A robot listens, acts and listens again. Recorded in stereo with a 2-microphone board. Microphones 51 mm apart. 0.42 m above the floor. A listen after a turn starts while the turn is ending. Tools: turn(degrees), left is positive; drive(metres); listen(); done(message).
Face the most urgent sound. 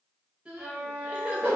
turn(degrees=-20)
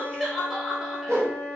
done("Facing the crying.")